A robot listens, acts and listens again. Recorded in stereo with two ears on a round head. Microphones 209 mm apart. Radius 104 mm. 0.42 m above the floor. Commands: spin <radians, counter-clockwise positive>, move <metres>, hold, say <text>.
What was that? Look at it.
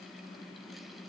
hold
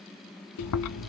spin 1.57
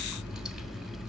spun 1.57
say Found it: chewing, straight ahead, under 1 m away.